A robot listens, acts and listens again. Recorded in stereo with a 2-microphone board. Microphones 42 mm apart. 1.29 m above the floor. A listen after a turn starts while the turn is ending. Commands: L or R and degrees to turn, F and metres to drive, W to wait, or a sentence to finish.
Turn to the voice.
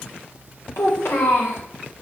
L65
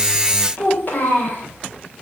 L45
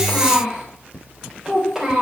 R10
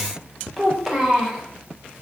Facing the child speaking, 2 to 4 m away.